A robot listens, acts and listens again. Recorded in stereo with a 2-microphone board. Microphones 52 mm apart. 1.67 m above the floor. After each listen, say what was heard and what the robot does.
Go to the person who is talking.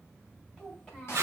The child speaking: about 20° left or 160° left. Turn 20° left.
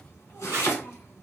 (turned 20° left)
Keep listening.
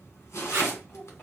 So it is at 140° left. Turn 140° left.
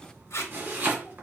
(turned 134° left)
Keep listening.
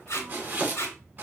Keep listening.
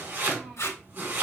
Drive 1.0 m forward.
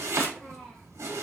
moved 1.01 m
The child speaking is now 10° left. Turn 10° left.
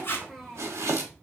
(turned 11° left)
Drive 1.0 m forward.
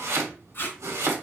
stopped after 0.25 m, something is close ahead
Keep listening.
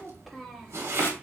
Arrived at the child speaking, straight ahead.